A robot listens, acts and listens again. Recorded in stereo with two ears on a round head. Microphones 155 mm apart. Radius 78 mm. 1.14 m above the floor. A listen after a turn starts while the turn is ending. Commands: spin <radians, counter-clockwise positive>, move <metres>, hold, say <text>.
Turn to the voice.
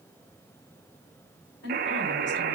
spin 1.31
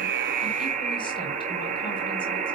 hold
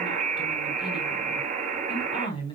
spin 0.52
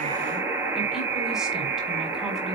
hold
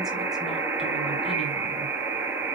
hold
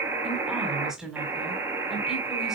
say Facing the woman speaking.